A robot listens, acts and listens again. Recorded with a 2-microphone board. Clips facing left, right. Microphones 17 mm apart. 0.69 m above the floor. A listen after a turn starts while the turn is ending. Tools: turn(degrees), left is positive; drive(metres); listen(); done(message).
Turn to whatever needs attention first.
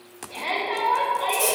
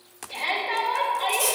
turn(degrees=-55)
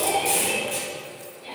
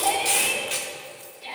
turn(degrees=-60)
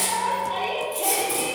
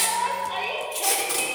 done("Found it: a shout, straight ahead, 2 to 4 m away.")